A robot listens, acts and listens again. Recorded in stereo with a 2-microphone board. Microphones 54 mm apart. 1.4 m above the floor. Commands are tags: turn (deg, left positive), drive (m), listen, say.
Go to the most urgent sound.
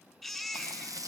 <turn deg="-30"/>
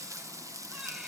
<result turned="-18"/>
<listen/>
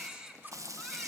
<turn deg="-160"/>
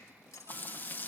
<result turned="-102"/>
<turn deg="-60"/>
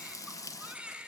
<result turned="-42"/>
<turn deg="-15"/>
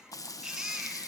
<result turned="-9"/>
<drive m="1.0"/>
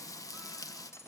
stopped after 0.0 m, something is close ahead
<listen/>
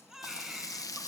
<say>Something is in my way. I am facing the baby crying but have not reached it.</say>